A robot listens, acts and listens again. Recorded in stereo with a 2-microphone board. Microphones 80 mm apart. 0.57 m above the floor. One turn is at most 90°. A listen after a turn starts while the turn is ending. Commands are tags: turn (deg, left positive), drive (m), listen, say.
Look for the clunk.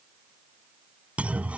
<turn deg="-15"/>
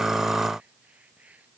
<listen/>
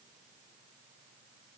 <say>I heard a clunk, but can't make it out now. It was about straight ahead or 150° right.</say>